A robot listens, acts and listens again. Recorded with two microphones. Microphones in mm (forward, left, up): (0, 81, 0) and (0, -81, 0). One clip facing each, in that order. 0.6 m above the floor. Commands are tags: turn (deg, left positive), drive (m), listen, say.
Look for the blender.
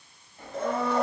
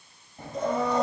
<turn deg="90"/>
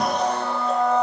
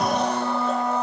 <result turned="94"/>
<say>Facing the blender, 2 to 4 m away.</say>